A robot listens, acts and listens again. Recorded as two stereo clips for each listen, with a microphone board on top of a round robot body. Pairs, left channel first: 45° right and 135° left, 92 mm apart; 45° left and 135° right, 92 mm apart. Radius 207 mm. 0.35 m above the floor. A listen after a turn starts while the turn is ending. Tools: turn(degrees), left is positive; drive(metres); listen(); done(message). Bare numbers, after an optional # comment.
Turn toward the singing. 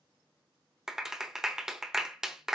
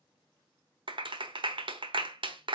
listen()
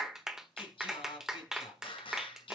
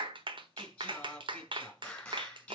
# The singing: 35° right.
turn(-35)
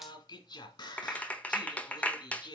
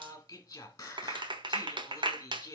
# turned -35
# The singing is now 15° right.
turn(-15)
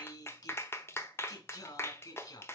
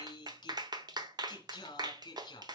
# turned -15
done("Facing the singing.")